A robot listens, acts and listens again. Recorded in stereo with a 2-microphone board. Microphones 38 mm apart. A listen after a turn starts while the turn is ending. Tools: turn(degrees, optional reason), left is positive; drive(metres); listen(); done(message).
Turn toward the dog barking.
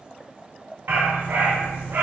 turn(degrees=-70, reason="The dog barking: about 70° right or 110° right.")
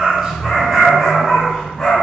turn(degrees=20, reason="So it is at 20° left.")
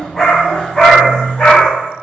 turn(degrees=30, reason="The dog barking is now 30° left.")
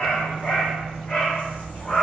turn(degrees=20, reason="The dog barking is now 20° left.")
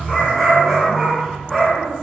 done("Facing the dog barking, 1 to 2 m away.")